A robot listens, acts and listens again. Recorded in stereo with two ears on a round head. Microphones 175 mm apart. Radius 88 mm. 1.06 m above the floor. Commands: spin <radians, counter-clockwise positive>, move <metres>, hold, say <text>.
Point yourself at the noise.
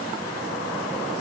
hold
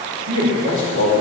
spin -1.31
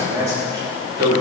spin -0.44
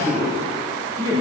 spin -0.44
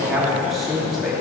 say Facing the man speaking, 2 to 4 m away.